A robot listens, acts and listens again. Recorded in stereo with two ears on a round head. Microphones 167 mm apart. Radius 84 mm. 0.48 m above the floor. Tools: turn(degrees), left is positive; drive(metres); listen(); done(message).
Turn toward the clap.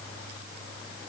listen()
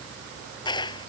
turn(degrees=25)
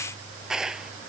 done("Found it: a clap, straight ahead.")